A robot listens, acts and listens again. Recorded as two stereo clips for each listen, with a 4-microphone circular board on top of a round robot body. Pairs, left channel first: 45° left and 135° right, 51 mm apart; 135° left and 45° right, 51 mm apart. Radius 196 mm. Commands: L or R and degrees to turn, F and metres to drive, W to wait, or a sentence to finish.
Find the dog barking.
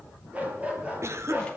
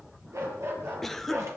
R75
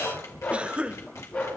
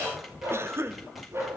R15
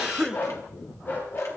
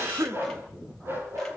Facing the dog barking.